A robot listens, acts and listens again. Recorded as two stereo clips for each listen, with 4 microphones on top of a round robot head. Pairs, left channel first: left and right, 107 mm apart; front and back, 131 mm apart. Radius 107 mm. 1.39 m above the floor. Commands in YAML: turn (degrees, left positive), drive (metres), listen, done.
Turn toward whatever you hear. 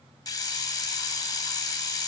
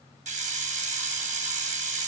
turn: 145
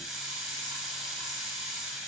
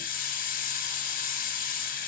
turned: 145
done: "Found it: a hiss, straight ahead, 1 to 2 m away."